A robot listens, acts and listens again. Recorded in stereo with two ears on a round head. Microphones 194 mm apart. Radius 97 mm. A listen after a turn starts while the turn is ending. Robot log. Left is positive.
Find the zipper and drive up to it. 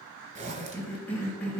note: The zipper: about 35° right or 145° right.
cmd yaw -35
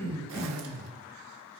cmd idle
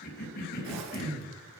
note: So it is at 110° right.
cmd yaw -110
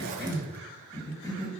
cmd idle
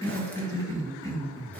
cmd idle
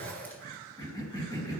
cmd fwd 1.0
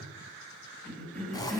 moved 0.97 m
note: The zipper is now 20° left.
cmd yaw +20
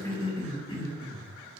cmd idle
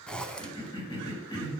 cmd fwd 1.0
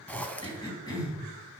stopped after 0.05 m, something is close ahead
end: I am next to the zipper.